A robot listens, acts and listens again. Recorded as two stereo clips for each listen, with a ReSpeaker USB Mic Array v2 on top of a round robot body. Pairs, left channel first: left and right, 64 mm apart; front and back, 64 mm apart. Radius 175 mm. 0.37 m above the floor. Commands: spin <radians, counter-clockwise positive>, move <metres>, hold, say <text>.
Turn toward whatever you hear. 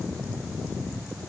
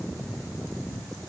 hold
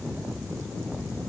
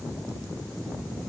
hold
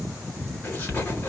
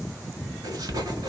spin 2.62
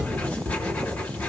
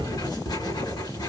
spin 0.35
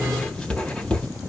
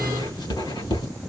spin 0.17
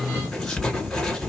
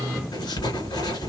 say Facing the writing.